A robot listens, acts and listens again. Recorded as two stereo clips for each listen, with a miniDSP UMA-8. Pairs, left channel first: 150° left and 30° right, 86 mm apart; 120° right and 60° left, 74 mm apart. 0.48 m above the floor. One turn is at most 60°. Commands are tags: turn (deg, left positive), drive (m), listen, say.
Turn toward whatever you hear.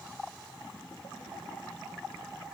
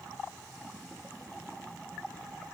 <listen/>
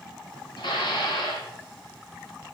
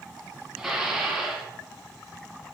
<turn deg="60"/>
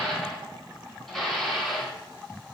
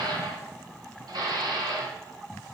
<turn deg="60"/>
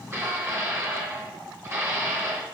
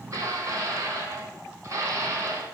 <turn deg="30"/>
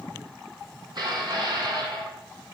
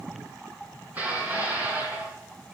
<say>Facing the dishes clattering, 2 to 4 m away.</say>